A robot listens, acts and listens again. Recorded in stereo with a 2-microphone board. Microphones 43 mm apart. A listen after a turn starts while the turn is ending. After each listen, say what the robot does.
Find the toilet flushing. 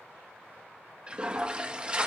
Turn 25° right.
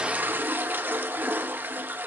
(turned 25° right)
Turn 130° right.
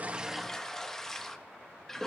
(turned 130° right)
Turn 10° left.
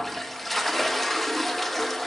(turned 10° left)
Found it: a toilet flushing, straight ahead.